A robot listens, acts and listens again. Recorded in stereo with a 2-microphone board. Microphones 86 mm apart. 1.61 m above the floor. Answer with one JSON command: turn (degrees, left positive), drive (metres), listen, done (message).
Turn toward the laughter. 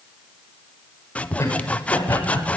{"turn": 30}
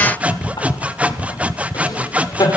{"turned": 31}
{"turn": 135}
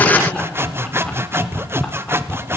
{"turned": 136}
{"listen": true}
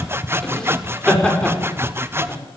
{"turn": 10}
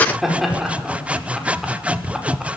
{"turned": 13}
{"done": "Facing the laughter, over 4 m away."}